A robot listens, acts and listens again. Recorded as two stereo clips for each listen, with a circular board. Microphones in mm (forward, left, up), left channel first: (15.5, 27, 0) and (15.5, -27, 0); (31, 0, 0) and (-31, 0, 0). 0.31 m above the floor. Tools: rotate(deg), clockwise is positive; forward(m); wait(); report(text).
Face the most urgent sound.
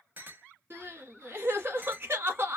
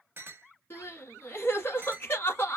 rotate(50)
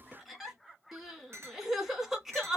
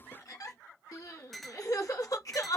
report("Facing the crying, 1 to 2 m away.")